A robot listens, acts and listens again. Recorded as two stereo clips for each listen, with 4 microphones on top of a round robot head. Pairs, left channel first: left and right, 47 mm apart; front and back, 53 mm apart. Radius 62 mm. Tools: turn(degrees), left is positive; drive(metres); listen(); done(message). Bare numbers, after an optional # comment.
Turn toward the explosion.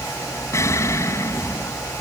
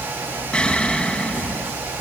# The explosion: 75° left.
turn(75)
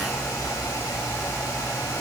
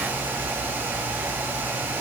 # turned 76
done("Facing where the explosion came from. I can't hear it now.")